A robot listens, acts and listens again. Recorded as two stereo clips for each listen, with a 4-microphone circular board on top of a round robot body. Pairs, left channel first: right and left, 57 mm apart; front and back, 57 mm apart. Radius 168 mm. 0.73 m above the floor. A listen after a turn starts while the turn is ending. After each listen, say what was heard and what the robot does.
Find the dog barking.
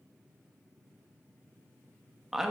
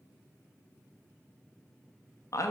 Keep listening.
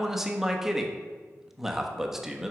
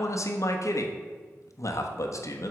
Keep listening.
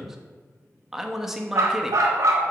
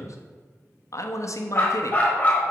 The dog barking: 65° left. Turn 65° left.
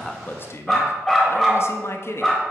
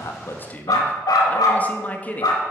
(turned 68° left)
Found it: a dog barking, straight ahead, 1 to 2 m away.